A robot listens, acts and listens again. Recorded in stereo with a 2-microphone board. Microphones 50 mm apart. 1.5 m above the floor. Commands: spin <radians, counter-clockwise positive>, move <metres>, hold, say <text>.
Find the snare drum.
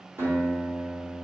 hold
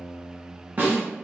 spin -0.70
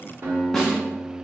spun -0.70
say Facing the snare drum.